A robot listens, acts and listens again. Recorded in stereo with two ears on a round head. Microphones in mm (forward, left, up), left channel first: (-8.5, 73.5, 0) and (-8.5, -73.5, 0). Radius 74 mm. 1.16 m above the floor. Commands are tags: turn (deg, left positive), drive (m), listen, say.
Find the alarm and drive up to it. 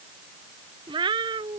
<listen/>
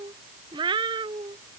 <listen/>
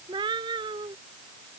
<say>I can't make out an alarm, only a cat meowing.</say>